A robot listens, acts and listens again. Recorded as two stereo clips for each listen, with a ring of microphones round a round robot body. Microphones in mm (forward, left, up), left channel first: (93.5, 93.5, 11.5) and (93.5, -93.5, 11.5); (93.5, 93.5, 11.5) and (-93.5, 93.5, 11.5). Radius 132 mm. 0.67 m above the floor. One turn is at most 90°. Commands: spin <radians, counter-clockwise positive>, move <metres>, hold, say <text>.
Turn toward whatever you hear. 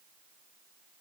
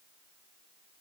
hold
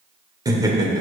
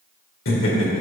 spin -0.35
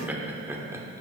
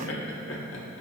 spin -0.26
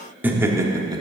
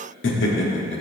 spin -0.35
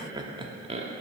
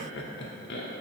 spin -0.61
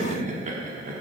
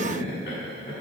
spin -0.87
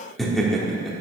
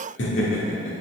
say Found it: laughter, straight ahead, 1 to 2 m away.